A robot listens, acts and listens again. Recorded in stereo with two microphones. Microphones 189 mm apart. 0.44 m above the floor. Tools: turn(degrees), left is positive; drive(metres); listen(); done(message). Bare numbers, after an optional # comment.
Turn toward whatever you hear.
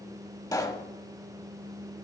# The pop: about 20° left or 160° left.
turn(20)
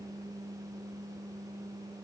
listen()
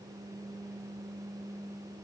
done("I heard a pop, but can't make it out now. It was about straight ahead or 140° left.")